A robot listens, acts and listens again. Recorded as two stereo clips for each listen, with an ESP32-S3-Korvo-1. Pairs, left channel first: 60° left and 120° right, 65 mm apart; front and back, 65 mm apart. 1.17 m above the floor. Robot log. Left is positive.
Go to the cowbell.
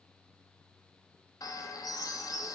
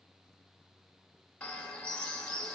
cmd idle
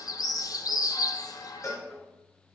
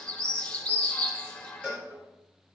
note: The cowbell: 105° left.
cmd yaw +105
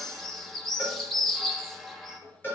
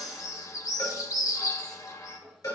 note: The cowbell is now 10° left.
cmd yaw +10
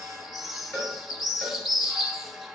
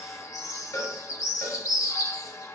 cmd fwd 1.0
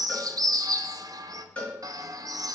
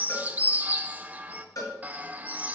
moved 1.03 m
cmd fwd 1.0
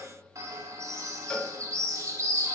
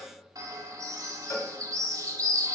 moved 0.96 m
note: The cowbell is now 15° right.
cmd yaw -15
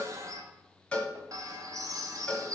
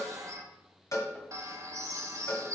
cmd fwd 1.0
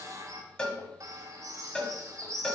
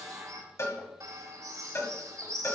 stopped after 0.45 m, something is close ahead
note: The cowbell is now 10° right.
cmd yaw -10
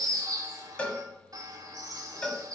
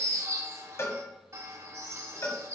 end: I am next to the cowbell.